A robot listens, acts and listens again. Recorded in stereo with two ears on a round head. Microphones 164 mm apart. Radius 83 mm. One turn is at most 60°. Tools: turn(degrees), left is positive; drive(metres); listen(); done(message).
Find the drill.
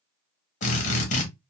turn(degrees=40)
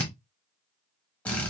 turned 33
turn(degrees=10)
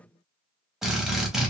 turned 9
done("Found it: a drill, straight ahead.")